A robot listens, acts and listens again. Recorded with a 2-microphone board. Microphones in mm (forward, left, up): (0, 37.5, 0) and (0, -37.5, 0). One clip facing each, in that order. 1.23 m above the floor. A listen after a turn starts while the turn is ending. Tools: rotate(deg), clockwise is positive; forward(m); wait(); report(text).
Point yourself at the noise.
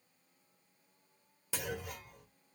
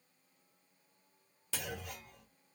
rotate(-30)
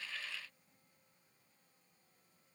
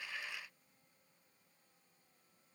wait()
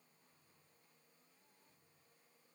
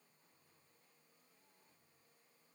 report("I heard a clunk, but can't make it out now. It was about 20° right or 140° left.")